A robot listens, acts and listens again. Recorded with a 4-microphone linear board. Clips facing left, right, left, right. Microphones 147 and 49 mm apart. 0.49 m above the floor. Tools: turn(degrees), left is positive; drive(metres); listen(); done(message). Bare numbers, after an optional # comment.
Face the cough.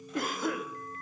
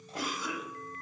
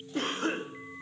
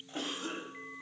# The cough: about 55° left or 125° left.
turn(55)
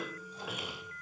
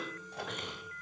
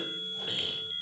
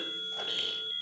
# So it is at 10° left.
turn(10)
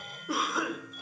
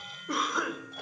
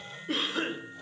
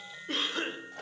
done("Found it: a cough, straight ahead, 1 to 2 m away.")